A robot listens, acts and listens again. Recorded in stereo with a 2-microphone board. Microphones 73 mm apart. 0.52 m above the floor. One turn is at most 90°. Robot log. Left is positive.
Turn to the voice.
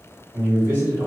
note: The man speaking: about 30° right or 150° right.
cmd yaw -30
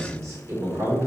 note: The man speaking: about 35° right or 145° right.
cmd yaw -35
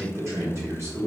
note: The man speaking: about 35° right or 145° right.
cmd yaw -35
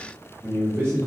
note: The man speaking: about 35° right or 145° right.
cmd yaw -35
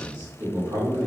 note: So it is at 135° right.
cmd yaw -90
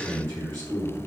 note: The man speaking is now 45° right.
cmd yaw -45
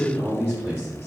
end: Facing the man speaking, 1 to 2 m away.